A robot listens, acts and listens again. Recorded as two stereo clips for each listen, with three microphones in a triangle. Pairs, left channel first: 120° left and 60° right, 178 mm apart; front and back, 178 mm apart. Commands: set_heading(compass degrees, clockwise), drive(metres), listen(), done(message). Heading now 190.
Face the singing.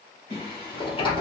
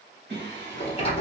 set_heading(35)
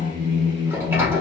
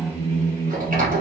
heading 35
set_heading(115)
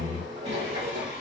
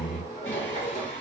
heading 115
set_heading(125)
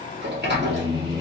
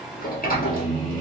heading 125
done("Facing the singing.")